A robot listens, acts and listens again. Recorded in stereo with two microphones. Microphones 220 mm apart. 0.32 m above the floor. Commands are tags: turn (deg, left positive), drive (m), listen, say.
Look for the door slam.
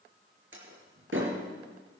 <turn deg="-65"/>
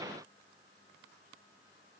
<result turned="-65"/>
<listen/>
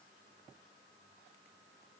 <say>I heard a door slam, but can't make it out now. It was about straight ahead or 50° right.</say>